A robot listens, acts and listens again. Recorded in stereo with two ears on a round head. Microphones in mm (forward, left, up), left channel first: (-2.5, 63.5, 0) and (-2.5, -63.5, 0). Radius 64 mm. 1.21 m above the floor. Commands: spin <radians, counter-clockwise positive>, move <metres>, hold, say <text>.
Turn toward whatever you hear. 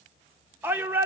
spin -0.52
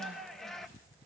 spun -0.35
say Found it: a shout, straight ahead, 1 to 2 m away.